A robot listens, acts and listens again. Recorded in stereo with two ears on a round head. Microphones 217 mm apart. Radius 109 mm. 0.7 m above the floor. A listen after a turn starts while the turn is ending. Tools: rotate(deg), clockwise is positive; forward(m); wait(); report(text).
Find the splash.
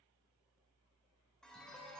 wait()
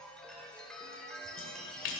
rotate(-60)
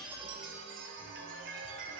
wait()
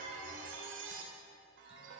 report("I heard a splash, but can't make it out now. It was about straight ahead or 60° left.")